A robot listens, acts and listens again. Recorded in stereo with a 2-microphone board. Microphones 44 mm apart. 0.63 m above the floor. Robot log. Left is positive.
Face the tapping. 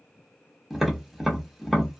cmd yaw +30
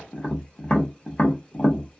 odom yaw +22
note: So it is at 155° left.
cmd yaw +155
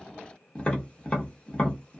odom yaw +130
note: The tapping is now 25° left.
cmd yaw +25
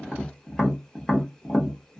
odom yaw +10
note: The tapping is now 15° left.
cmd yaw +15
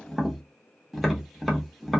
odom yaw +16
end: Found it: tapping, straight ahead, under 1 m away.